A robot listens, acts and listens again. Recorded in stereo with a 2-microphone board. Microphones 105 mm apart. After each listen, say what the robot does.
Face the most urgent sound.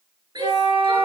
Turn 40° right.
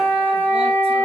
Keep listening.
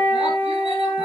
Keep listening.
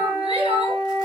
Turn 95° right.
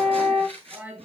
Turn 20° right.
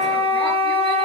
Keep listening.
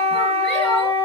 Keep listening.
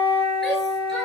Facing where the shout came from. I can't hear it now.